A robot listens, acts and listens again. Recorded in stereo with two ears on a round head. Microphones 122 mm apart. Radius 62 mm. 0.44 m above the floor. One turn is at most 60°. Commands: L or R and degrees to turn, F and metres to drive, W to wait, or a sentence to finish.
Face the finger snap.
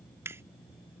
R20
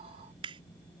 R60
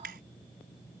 R60
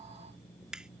Facing the finger snap.